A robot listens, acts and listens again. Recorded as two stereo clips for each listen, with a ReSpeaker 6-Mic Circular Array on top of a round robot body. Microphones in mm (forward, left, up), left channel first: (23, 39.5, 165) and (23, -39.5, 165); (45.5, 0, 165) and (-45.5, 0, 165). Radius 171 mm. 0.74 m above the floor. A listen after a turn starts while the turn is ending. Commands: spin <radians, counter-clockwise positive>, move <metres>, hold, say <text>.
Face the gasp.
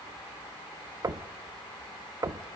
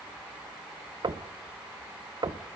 hold
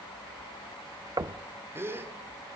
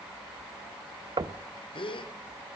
spin -0.52
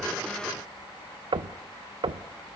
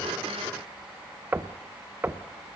say Facing where the gasp came from. I can't hear it now.